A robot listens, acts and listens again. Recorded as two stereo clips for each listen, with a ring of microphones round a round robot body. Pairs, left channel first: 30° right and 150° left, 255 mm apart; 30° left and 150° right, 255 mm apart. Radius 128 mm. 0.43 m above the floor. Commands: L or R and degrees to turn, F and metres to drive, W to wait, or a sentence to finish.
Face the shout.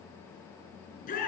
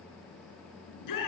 L30
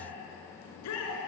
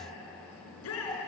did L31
Facing the shout, over 4 m away.